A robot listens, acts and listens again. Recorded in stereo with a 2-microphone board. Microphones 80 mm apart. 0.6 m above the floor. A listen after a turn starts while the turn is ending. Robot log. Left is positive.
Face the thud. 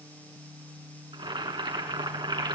cmd idle
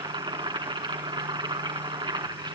cmd idle
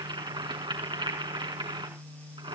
end: I can't make out a thud, only boiling.